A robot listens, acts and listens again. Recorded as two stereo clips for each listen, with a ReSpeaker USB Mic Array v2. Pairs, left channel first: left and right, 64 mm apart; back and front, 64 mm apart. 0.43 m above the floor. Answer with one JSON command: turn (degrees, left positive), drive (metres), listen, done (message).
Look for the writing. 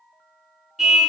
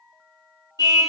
{"listen": true}
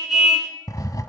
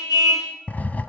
{"turn": 115}
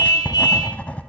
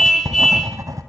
{"turn": 20}
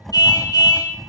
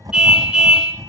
{"done": "Facing the writing, under 1 m away."}